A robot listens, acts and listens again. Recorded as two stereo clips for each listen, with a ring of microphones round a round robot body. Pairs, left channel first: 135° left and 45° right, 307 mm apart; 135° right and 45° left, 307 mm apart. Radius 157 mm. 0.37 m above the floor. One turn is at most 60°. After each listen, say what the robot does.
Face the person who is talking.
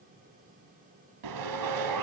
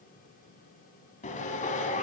Keep listening.
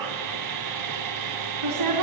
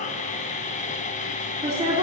Turn 25° right.
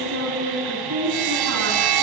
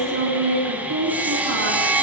Facing the woman speaking, 2 to 4 m away.